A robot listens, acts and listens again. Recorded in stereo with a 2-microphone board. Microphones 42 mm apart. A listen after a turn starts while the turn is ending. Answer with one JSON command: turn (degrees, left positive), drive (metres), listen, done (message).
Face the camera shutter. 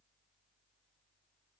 {"listen": true}
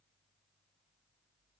{"listen": true}
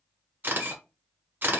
{"turn": -50}
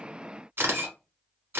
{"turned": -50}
{"turn": -75}
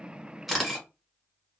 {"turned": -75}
{"done": "Facing the camera shutter."}